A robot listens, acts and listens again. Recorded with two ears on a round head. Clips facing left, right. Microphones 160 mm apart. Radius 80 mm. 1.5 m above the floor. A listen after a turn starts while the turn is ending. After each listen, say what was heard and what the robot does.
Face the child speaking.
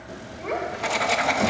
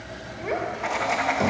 Turn 30° left.
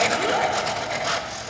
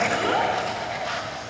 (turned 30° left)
Keep listening.
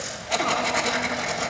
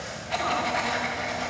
Keep listening.
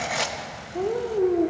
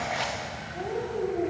So it is at 115° left. Turn 115° left.
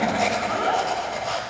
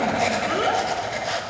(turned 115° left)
The child speaking is now 40° right. Turn 40° right.
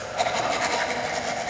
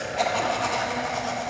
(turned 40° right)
Keep listening.
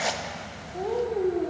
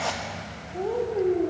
Found it: a child speaking, straight ahead, 2 to 4 m away.